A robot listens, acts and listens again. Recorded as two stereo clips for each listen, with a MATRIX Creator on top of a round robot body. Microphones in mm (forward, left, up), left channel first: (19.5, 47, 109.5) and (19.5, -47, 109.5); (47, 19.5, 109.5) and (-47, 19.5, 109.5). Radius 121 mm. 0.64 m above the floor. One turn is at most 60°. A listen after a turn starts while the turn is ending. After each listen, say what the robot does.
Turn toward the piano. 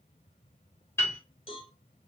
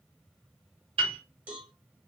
Turn 60° left.
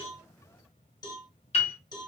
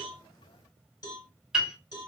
Turn 60° left.
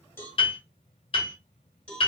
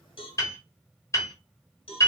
Turn 60° left.
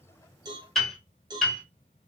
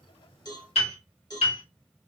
Facing the piano, under 1 m away.